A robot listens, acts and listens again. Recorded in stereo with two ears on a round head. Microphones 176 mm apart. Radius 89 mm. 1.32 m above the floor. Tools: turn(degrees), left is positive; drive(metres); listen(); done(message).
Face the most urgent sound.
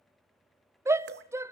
turn(degrees=-30)
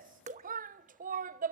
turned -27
turn(degrees=-140)
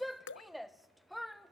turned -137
done("Found it: a shout, straight ahead.")